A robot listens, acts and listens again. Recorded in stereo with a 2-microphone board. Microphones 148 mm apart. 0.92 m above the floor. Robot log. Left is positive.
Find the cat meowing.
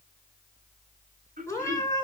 note: The cat meowing: about 20° left or 160° left.
cmd yaw +20
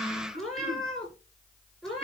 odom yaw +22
end: Found it: a cat meowing, straight ahead, over 4 m away.